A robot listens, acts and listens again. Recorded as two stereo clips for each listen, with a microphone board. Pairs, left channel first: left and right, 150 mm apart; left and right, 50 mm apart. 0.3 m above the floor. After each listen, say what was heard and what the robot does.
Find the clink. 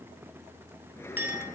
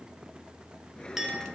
Turn 30° right.
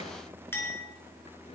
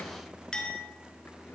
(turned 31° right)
So it is at 15° left. Turn 15° left.
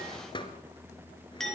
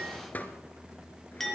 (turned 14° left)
Facing the clink, 2 to 4 m away.